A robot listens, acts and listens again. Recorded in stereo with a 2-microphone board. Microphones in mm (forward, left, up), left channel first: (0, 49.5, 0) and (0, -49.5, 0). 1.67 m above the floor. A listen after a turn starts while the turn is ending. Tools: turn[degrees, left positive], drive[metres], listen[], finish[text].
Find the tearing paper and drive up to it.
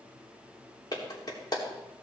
Action: listen[]
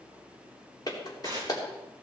Thought: The tearing paper: about 40° right or 140° right.
Action: turn[-40]
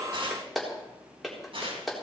Thought: So it is at 95° right.
Action: turn[-95]
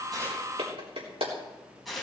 Action: drive[1.0]
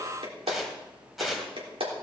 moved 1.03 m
Action: drive[1.0]
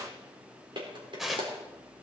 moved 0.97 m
Action: drive[1.0]
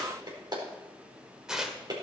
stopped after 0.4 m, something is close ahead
Thought: The tearing paper is now 10° right.
Action: turn[-10]
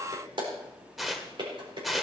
Action: finish[I am next to the tearing paper.]